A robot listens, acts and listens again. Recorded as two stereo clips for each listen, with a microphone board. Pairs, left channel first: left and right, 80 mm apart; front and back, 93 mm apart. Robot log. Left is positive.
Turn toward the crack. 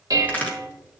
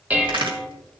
note: The crack: 155° left.
cmd yaw +155
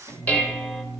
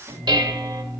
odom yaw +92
note: Nothing new. It was at 65° left.
cmd yaw +65
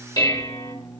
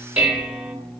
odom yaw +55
note: Nothing new. It was at 10° left.
cmd yaw +10
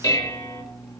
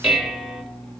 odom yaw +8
end: I heard a crack from this way, but can't make it out now.